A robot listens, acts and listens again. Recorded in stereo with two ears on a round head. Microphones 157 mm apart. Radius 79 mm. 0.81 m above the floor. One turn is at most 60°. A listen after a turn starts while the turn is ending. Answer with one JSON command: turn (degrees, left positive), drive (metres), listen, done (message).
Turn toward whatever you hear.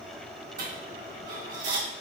{"turn": -50}
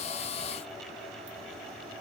{"listen": true}
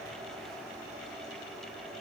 {"done": "I heard a dropped coin, but can't make it out now. It was about straight ahead or 80° right."}